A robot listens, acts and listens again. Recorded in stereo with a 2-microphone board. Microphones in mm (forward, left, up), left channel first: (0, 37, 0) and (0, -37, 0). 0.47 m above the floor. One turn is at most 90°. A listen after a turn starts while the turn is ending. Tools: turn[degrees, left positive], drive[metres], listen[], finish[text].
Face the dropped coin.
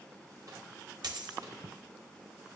Thought: The dropped coin: about 65° right or 115° right.
Action: turn[-65]
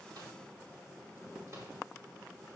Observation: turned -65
Action: listen[]
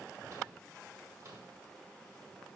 Action: finish[I heard a dropped coin, but can't make it out now. It was about straight ahead or 50° right.]